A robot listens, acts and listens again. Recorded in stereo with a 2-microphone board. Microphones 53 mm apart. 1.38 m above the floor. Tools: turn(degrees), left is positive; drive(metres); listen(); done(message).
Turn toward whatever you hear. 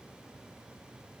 listen()
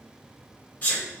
turn(degrees=35)
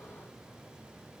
listen()
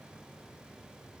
done("I heard a sneeze, but can't make it out now. It was about straight ahead or 110° left.")